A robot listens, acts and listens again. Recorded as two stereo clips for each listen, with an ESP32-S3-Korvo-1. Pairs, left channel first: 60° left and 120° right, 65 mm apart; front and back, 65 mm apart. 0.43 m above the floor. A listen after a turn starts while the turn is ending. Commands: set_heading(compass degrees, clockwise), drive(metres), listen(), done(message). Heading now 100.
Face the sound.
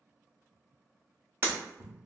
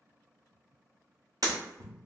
set_heading(275)
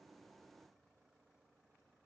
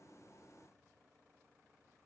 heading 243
set_heading(273)
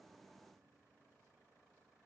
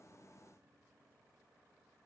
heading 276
done("Facing where the breaking glass came from. I can't hear it now.")